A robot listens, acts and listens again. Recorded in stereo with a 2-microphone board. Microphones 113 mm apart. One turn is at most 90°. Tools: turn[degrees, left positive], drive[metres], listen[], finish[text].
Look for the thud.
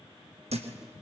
Thought: The thud: about 70° right or 110° right.
Action: turn[-70]
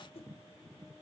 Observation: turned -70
Action: listen[]
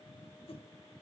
Action: finish[I heard a thud, but can't make it out now. It was about straight ahead or 40° right.]